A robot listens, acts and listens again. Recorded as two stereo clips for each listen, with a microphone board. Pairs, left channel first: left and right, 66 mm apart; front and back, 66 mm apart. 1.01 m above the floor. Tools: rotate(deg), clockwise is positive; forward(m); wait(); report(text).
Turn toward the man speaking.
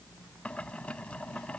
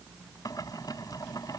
wait()
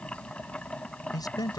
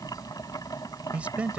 rotate(-110)
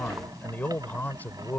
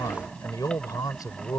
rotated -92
rotate(-25)
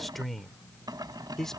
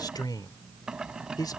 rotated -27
report("Facing the man speaking.")